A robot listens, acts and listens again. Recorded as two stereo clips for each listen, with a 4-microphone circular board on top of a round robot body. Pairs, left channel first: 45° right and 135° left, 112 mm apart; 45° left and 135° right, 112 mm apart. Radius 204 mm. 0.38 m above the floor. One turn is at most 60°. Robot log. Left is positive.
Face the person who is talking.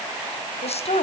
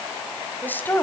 note: The woman speaking: 25° right.
cmd yaw -25
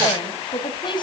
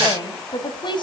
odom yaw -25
end: Facing the woman speaking, 2 to 4 m away.